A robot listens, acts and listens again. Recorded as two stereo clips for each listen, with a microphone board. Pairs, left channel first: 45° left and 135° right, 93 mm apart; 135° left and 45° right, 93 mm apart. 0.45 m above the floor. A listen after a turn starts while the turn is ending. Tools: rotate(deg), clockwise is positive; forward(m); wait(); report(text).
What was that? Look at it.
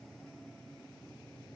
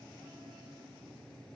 wait()
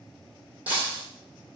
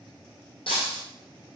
rotate(-150)
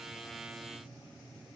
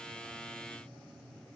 report("Facing where the breaking glass came from. I can't hear it now.")